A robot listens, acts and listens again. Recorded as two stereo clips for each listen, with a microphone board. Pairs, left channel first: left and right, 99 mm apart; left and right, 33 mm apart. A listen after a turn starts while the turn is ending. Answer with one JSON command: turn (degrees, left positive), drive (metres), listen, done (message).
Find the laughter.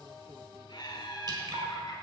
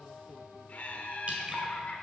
{"turn": 50}
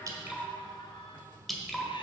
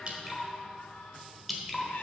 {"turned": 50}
{"listen": true}
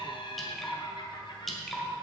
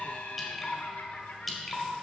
{"turn": 70}
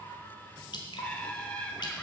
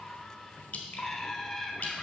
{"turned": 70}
{"turn": 15}
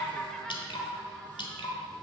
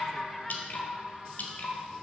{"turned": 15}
{"listen": true}
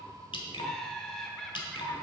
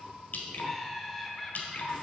{"done": "Facing the laughter, 1 to 2 m away."}